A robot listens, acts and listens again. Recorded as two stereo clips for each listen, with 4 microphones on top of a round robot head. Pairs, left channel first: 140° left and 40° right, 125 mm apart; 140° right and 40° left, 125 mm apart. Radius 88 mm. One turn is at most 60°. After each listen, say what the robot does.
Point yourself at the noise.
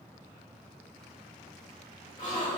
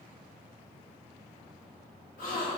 Turn 60° right.
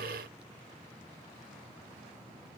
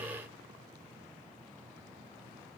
Turn 60° right.
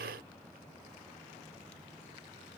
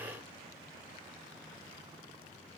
Turn 40° right.
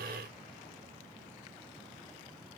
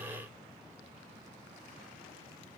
Facing where the gasp came from. I can't hear it now.